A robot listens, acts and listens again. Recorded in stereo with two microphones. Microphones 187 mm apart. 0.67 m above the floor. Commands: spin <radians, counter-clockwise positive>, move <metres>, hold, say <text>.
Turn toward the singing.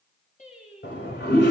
spin 0.70
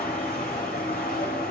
hold
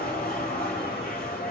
hold
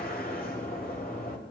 say I heard singing, but can't make it out now. It was about straight ahead or 100° left.